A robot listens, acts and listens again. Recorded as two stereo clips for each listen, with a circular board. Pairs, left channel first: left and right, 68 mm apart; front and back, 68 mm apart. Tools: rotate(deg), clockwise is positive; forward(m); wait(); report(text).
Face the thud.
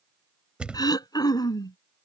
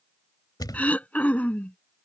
rotate(15)
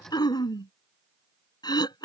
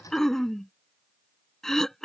report("Facing where the thud came from. I can't hear it now.")